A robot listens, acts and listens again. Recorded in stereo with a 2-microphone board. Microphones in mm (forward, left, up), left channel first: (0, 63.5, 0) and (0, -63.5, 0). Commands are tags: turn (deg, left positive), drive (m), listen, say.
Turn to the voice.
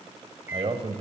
<turn deg="-50"/>
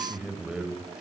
<turn deg="-10"/>
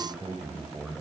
<say>Facing the man speaking.</say>